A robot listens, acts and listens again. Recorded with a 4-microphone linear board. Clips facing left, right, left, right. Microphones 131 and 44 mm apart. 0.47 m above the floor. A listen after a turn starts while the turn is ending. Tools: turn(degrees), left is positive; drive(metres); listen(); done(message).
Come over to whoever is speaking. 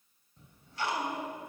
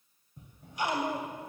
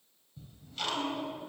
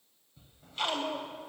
turn(degrees=-70)
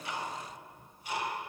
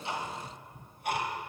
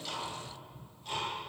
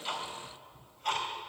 listen()
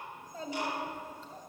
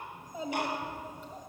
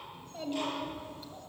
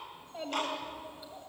turn(degrees=-15)
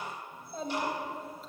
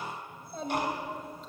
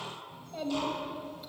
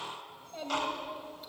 drive(metres=1.0)
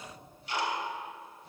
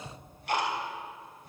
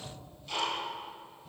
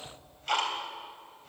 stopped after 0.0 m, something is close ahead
listen()
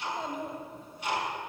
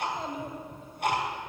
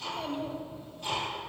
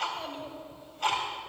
done("Something is in my way. I am facing the child speaking but have not reached it.")